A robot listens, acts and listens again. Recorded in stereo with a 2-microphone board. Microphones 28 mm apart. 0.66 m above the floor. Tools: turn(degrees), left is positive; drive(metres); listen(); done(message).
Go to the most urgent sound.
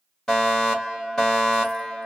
turn(degrees=25)
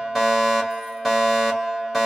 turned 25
turn(degrees=10)
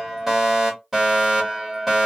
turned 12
drive(metres=1.0)
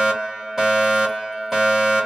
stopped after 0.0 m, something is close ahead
turn(degrees=-10)
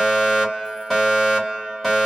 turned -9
done("Blocked. The fire alarm is further on, straight ahead.")